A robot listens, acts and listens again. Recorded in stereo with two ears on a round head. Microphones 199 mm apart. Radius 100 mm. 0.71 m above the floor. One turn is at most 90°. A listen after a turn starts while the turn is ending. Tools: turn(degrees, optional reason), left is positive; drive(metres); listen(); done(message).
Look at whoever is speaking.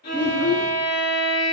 turn(degrees=90)
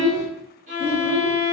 turn(degrees=10, reason="So it is at 10° left.")
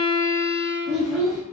done("Facing the child speaking.")